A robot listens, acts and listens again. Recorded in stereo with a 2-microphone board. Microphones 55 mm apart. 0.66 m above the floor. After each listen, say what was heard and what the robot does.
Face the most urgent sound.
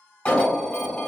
The alarm: about 20° left or 160° left. Turn 20° left.
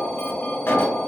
So it is at 135° left. Turn 135° left.
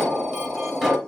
Facing the alarm.